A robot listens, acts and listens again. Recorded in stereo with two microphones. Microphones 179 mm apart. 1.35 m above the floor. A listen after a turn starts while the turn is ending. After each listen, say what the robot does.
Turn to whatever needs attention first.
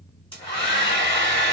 Keep listening.
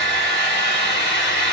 Keep listening.
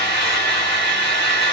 I can't make out anything urgent to turn to.